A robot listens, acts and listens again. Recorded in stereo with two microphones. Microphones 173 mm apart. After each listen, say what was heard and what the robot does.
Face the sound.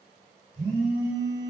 The phone buzzing: about 45° right or 135° right. Turn 45° right.
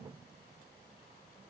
Keep listening.
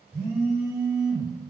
Found it: a phone buzzing, straight ahead, 1 to 2 m away.